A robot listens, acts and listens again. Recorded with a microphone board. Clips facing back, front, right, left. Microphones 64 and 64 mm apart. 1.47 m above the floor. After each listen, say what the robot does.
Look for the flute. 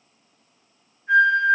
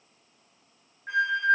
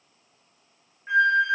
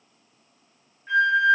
Turn 20° right.
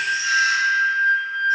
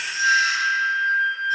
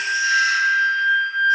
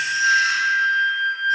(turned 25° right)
Facing the flute, 1 to 2 m away.